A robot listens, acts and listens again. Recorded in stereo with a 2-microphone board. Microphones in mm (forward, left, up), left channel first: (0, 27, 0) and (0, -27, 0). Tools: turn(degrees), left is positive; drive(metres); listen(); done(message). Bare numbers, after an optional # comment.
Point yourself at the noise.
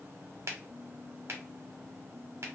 # The finger snap: about 55° right or 125° right.
turn(-55)
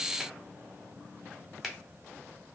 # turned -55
done("Found it: a finger snap, straight ahead.")